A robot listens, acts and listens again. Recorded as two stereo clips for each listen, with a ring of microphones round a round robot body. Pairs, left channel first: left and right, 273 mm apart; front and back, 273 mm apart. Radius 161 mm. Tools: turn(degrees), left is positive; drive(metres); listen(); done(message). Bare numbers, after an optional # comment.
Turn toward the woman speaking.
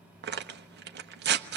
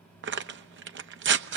listen()
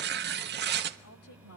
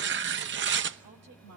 # The woman speaking: 130° left.
turn(130)
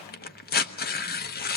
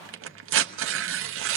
listen()
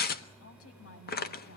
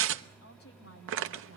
# The woman speaking is now 55° left.
turn(55)
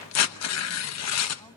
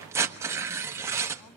listen()
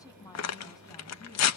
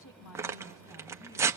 # The woman speaking is now 15° left.
turn(15)
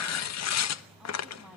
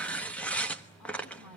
done("Facing the woman speaking, over 4 m away.")